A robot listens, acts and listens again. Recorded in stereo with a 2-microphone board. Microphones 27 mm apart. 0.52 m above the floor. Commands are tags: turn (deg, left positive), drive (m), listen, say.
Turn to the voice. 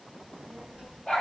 <turn deg="-35"/>
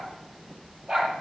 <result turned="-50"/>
<turn deg="-105"/>
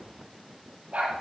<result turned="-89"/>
<turn deg="-15"/>
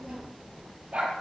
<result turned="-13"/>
<turn deg="-15"/>
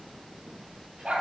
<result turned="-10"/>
<say>Facing the child speaking.</say>